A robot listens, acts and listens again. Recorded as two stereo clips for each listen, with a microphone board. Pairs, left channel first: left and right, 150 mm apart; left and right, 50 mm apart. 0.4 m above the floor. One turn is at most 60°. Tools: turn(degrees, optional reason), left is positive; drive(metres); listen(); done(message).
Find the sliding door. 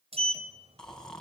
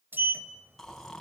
turn(degrees=-40, reason="The sliding door: about 40° right or 140° right.")
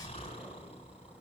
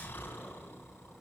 listen()
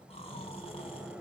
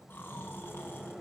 turn(degrees=-10, reason="So it is at 10° right.")
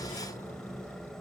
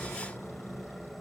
done("Facing the sliding door.")